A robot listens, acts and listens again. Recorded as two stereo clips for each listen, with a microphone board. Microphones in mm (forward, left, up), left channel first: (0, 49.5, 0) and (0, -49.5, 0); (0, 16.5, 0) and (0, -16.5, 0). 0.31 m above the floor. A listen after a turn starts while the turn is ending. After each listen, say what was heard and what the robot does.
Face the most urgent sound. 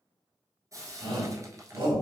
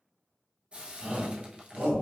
The shout: about 55° right or 125° right. Turn 55° right.
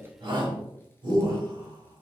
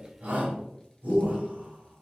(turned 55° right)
So it is at 50° right. Turn 50° right.
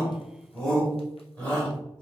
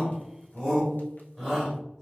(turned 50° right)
The shout is now 20° left. Turn 20° left.
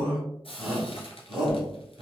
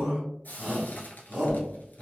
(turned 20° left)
Found it: a shout, straight ahead, 1 to 2 m away.